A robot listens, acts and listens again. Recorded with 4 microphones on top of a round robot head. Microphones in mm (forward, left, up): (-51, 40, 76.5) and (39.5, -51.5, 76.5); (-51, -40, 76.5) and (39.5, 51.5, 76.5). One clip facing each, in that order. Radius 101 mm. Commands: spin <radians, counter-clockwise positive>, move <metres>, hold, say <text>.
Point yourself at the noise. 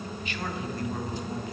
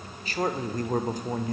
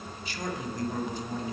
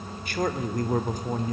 say Found it: a man speaking, straight ahead.